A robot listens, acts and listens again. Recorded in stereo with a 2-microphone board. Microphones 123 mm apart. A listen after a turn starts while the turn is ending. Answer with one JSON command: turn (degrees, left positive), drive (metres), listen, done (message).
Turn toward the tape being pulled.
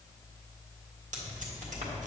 {"turn": -90}
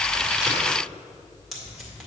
{"done": "Facing the tape being pulled."}